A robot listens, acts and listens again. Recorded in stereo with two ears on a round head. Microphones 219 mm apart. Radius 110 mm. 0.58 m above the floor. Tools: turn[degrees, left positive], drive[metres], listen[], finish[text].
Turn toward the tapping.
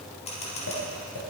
Thought: The tapping: about 60° left or 120° left.
Action: turn[60]
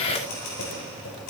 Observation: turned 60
Action: listen[]
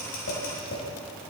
Thought: So it is at 50° left.
Action: turn[50]
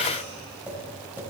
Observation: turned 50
Action: finish[Found it: tapping, straight ahead.]